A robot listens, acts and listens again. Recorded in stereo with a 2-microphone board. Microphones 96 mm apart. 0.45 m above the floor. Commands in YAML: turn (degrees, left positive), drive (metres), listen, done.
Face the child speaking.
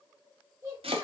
turn: -30
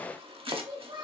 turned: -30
turn: -115
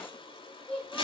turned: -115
turn: 15
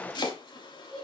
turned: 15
done: "Facing the child speaking."